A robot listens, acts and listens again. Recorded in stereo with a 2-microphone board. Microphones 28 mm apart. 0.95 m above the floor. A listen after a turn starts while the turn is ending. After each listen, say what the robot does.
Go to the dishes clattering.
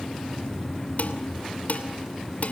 Turn 60° left.
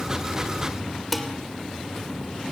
Drive 1.0 m forward.
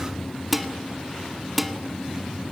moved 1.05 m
Drive 1.0 m forward.
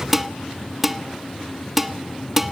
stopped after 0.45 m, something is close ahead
Turn 10° right.
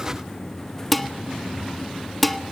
Arrived at the dishes clattering, straight ahead.